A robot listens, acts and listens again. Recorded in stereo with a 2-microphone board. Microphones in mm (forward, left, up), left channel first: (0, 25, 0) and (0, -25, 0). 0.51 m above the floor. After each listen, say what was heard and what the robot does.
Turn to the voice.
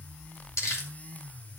Keep listening.
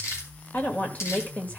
The woman speaking: about 30° left or 150° left. Turn 30° left.
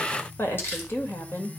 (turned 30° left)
So it is at 115° left. Turn 115° left.
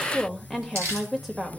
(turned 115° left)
Found it: a woman speaking, straight ahead, 1 to 2 m away.